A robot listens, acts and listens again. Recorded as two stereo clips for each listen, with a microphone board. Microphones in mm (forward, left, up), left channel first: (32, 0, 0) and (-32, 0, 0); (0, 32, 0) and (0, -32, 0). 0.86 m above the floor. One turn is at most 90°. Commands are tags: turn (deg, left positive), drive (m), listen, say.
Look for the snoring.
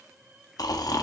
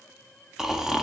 <turn deg="-10"/>
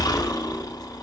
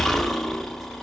<say>Facing the snoring.</say>